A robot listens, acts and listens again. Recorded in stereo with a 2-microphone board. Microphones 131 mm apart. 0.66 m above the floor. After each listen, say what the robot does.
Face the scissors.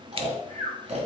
Turn 45° right.
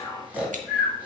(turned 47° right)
Keep listening.
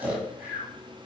Keep listening.
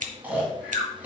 Turn 90° right.
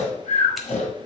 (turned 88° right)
Keep listening.
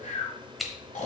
Found it: scissors, straight ahead, under 1 m away.